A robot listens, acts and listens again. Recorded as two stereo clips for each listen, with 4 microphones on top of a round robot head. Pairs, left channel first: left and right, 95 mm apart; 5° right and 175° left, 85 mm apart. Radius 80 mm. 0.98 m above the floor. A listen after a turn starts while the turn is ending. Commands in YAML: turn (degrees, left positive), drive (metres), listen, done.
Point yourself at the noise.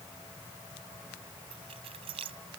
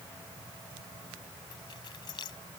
turn: -55
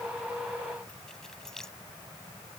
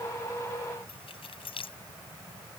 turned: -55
done: "Found it: keys jangling, straight ahead."